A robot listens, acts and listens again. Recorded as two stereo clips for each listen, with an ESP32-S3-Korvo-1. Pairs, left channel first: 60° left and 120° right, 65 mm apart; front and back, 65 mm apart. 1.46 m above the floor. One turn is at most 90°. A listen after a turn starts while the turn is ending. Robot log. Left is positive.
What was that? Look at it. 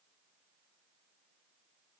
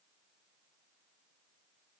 cmd idle
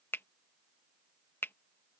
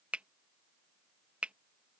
note: The finger snap: 110° left.
cmd yaw +90
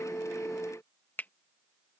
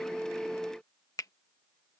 end: Found it: a finger snap, straight ahead.